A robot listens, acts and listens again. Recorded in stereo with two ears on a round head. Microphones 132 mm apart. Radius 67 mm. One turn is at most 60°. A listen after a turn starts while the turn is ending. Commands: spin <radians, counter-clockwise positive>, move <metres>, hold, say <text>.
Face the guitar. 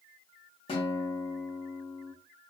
spin 0.70
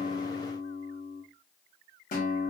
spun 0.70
spin 1.05
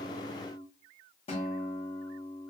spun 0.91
spin 0.79
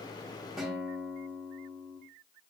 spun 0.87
say Facing the guitar.